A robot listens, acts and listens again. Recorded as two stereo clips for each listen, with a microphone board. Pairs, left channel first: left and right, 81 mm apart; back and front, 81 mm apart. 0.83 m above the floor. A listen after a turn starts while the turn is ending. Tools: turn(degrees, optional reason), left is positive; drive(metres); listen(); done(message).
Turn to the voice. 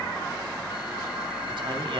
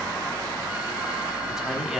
turn(degrees=-85, reason="The man speaking: 85° right.")
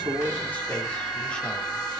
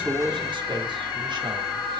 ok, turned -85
listen()
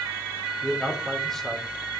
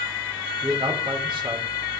done("Facing the man speaking, 2 to 4 m away.")